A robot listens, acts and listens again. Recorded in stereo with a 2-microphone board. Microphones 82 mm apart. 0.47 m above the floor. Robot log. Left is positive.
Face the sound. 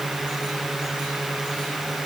cmd idle
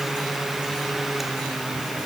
cmd idle
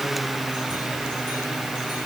end: I can't make out anything to turn to.